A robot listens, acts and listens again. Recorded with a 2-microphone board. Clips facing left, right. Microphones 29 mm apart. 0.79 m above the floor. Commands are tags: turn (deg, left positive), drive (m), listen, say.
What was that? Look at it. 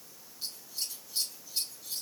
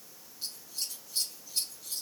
<turn deg="30"/>
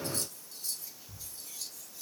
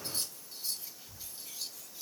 <turn deg="-25"/>
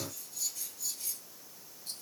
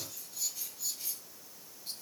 <turn deg="-15"/>
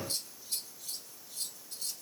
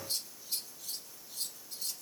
<say>Found it: scissors, straight ahead, over 4 m away.</say>